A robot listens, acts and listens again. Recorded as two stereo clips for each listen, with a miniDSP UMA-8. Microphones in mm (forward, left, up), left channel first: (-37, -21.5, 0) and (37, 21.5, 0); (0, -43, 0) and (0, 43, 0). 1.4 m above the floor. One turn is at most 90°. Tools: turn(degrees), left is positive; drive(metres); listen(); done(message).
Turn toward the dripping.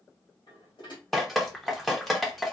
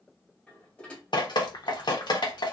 turn(degrees=-60)
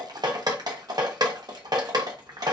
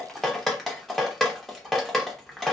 done("Found it: dripping, straight ahead.")